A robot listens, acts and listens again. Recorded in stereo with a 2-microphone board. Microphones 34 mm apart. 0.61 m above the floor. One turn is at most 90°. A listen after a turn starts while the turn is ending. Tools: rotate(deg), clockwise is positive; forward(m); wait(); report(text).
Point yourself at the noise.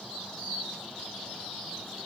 wait()
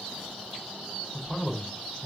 rotate(-20)
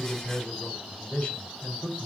rotate(-90)
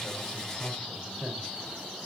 rotate(-50)
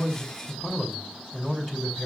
report("Found it: a man speaking, straight ahead, 2 to 4 m away.")